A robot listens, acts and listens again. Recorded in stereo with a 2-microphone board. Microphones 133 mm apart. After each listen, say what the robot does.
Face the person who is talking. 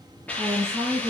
Turn 25° right.
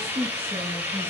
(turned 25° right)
Turn 130° right.
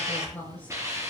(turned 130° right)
Turn 10° left.
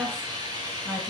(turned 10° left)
Facing the woman speaking, over 4 m away.